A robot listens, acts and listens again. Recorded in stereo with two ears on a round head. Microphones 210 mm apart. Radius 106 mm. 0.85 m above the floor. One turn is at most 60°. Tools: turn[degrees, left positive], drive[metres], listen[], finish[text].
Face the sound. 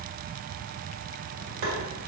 Thought: The tapping: about 55° right or 125° right.
Action: turn[-55]
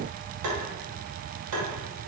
Thought: So it is at 70° right.
Action: turn[-60]
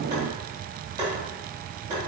Thought: The tapping is now 20° right.
Action: turn[-20]
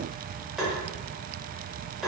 Action: finish[Found it: tapping, straight ahead.]